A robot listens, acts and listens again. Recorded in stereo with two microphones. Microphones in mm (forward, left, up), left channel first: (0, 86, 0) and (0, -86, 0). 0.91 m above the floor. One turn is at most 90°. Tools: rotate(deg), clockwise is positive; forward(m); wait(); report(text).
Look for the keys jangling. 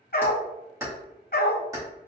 rotate(20)
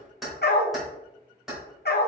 rotate(-30)
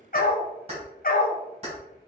rotate(35)
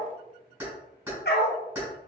rotate(10)
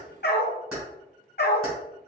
report("Facing the keys jangling.")